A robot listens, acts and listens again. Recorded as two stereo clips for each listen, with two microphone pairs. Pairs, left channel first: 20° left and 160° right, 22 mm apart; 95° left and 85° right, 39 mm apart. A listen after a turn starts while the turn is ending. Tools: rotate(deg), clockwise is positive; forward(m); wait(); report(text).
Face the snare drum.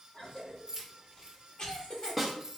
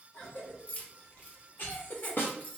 rotate(-105)
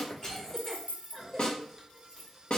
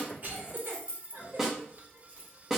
rotate(10)
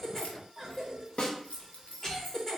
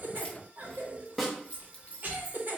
report("Found it: a snare drum, straight ahead, under 1 m away.")